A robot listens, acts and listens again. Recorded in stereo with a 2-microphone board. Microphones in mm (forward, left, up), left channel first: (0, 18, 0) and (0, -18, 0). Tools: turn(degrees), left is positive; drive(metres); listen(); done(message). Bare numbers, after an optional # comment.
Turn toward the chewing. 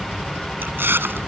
turn(-90)
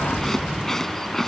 # So it is at 10° left.
turn(10)
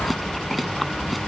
done("Found it: chewing, straight ahead.")